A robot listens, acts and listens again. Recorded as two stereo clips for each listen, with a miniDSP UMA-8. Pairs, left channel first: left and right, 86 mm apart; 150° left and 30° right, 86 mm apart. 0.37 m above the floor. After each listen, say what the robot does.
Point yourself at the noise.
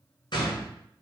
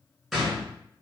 Turn 60° left.
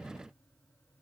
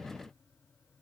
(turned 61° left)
I heard a gunshot from this way, but can't make it out now.